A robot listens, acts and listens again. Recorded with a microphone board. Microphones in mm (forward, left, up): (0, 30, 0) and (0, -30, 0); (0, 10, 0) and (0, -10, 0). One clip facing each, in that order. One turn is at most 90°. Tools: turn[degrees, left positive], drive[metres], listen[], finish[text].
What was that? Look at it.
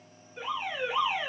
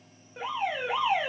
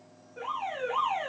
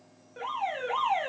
Thought: The alarm: about 60° right or 120° right.
Action: turn[-60]
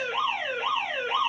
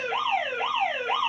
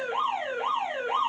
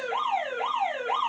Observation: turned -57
Thought: So it is at 60° right.
Action: turn[-60]
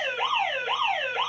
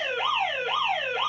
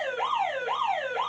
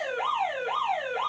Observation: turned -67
Action: finish[Facing the alarm, 1 to 2 m away.]